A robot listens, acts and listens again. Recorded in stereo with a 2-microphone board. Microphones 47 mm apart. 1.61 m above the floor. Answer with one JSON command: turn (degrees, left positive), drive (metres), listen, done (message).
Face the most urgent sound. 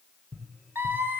{"turn": -50}
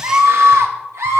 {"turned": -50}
{"turn": -75}
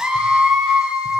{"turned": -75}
{"turn": -15}
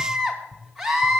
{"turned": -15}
{"done": "Found it: a scream, straight ahead, 2 to 4 m away."}